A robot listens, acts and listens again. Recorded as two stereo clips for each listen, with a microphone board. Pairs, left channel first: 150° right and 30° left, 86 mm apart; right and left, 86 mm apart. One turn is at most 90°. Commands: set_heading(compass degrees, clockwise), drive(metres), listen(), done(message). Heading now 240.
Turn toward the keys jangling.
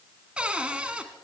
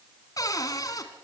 listen()
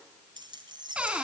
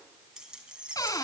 set_heading(230)
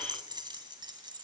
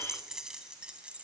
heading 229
set_heading(214)
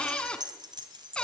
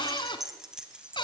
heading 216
set_heading(206)
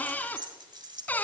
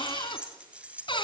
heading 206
set_heading(186)
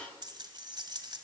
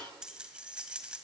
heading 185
set_heading(175)
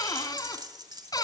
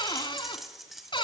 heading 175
done("Found it: keys jangling, straight ahead.")